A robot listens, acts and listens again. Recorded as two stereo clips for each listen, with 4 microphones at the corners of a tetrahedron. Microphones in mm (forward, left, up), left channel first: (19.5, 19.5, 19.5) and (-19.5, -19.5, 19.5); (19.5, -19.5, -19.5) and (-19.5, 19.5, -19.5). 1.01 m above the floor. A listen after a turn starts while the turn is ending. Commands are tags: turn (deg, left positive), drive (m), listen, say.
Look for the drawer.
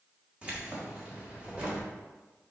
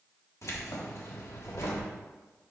<listen/>
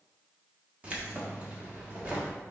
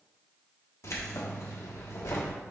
<listen/>
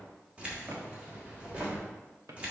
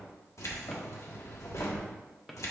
<turn deg="-135"/>
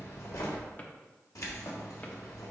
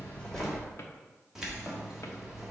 <listen/>
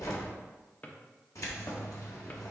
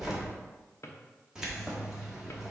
<turn deg="-15"/>
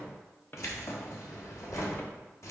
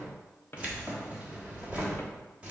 <say>Found it: a drawer, straight ahead.</say>